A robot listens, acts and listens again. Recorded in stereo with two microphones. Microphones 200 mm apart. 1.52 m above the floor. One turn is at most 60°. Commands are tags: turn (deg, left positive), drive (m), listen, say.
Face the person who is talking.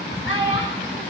<turn deg="60"/>
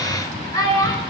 <turn deg="20"/>
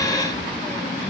<listen/>
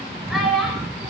<say>Facing the child speaking.</say>